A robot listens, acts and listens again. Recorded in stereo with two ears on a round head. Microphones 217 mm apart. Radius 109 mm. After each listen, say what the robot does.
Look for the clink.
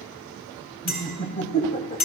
Turn 40° left.
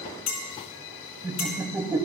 Turn 95° left.
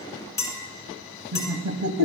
Turn 15° left.
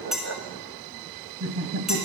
Found it: a clink, straight ahead, 2 to 4 m away.